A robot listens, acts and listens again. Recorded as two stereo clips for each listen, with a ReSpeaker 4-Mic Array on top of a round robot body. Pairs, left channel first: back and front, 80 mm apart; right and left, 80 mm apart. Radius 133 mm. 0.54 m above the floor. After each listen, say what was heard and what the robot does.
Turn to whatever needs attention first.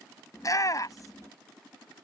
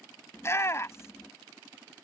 The shout: 140° right. Turn 140° right.
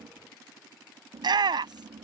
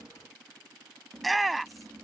Found it: a shout, straight ahead.